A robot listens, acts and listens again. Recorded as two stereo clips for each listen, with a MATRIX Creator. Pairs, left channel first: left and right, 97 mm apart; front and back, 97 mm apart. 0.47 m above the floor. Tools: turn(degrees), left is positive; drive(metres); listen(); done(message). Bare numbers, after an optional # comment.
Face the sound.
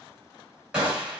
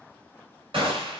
# The gunshot: 165° right.
turn(-165)
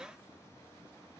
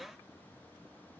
done("Facing where the gunshot came from. I can't hear it now.")